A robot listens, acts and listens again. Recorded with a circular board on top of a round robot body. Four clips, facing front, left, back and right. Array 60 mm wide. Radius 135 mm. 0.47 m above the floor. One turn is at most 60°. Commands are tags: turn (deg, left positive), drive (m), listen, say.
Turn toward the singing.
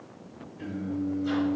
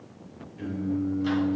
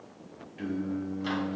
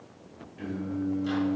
<turn deg="-60"/>
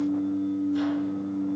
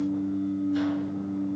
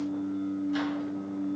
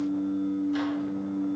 <turn deg="-60"/>
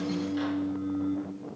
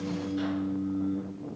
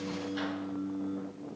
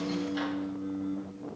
<turn deg="-20"/>
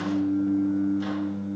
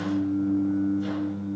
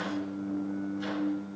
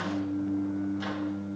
<say>Facing the singing.</say>